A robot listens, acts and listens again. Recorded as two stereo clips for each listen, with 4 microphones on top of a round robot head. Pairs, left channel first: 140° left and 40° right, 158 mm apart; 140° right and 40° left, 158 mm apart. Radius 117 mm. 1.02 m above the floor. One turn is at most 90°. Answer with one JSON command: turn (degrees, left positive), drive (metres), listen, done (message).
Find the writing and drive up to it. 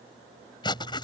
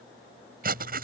{"turn": 75}
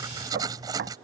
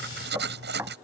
{"turn": 25}
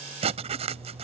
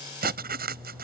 {"turn": 10}
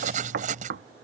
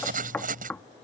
{"drive": 1.0}
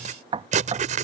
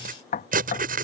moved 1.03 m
{"drive": 1.0}
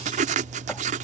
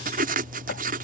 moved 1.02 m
{"drive": 1.0}
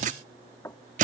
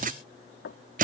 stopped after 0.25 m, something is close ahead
{"done": "Arrived at the writing, straight ahead."}